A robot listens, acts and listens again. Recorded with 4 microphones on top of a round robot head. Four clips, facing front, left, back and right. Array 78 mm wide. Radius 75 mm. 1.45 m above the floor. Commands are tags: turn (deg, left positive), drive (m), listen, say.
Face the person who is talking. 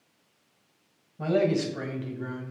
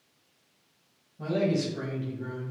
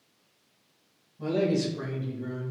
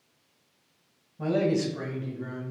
<say>Found it: a man speaking, straight ahead.</say>